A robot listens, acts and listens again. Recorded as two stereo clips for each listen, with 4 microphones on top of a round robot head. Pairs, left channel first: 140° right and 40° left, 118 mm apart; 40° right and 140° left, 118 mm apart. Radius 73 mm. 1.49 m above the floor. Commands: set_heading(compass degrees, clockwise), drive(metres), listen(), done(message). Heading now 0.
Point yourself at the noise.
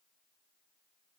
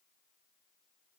listen()
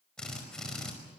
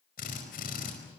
set_heading(55)
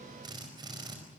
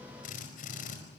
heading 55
set_heading(70)
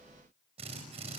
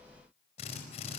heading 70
done("Facing the drill.")